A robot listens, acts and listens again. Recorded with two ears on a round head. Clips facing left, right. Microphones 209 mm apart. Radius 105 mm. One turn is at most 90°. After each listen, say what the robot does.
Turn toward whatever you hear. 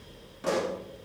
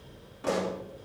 Turn 35° left.
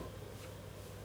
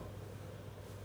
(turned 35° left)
Keep listening.
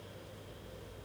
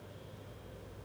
I heard a pop, but can't make it out now. It was about straight ahead or 110° left.